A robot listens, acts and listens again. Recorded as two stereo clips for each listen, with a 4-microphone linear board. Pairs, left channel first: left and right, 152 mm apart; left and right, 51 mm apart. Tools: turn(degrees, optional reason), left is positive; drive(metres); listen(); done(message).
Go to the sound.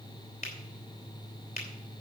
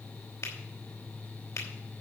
turn(degrees=75, reason="The finger snap: about 75° left or 105° left.")
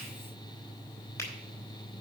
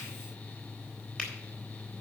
turn(degrees=20, reason="So it is at 20° left.")
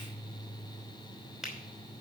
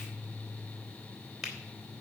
drive(metres=1.0)
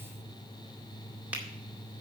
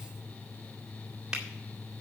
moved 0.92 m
turn(degrees=-10, reason="The finger snap is now 10° right.")
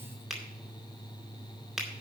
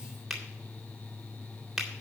drive(metres=1.0)
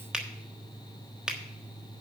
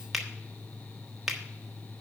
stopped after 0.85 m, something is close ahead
done("Arrived at the finger snap, straight ahead.")